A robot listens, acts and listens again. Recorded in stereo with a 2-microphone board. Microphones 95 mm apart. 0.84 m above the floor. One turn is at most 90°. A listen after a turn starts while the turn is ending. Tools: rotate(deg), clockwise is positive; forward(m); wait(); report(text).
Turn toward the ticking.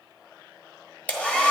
wait()
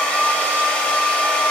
wait()
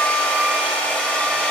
report("I can't make out ticking to turn to.")